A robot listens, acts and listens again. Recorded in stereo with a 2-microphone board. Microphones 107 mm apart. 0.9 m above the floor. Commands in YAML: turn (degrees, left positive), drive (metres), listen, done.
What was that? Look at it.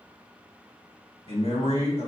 turn: 75
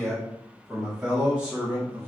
turn: -20
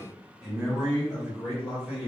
turn: -15
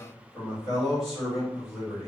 done: "Found it: a man speaking, straight ahead, 2 to 4 m away."